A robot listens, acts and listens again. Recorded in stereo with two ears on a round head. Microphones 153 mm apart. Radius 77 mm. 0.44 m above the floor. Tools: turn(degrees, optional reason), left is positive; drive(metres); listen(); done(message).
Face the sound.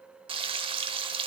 turn(degrees=-30, reason="The frying: about 30° right or 150° right.")
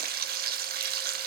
turn(degrees=-115, reason="So it is at 115° right.")
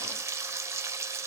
turn(degrees=-15, reason="The frying is now 15° right.")
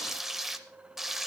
done("Facing the frying, under 1 m away.")